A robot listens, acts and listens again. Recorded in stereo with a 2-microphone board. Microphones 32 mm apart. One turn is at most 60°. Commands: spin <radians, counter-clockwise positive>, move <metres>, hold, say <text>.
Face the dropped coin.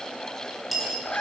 spin 0.52
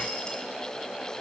hold
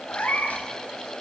say I heard a dropped coin, but can't make it out now. It was about 30° right or 150° left.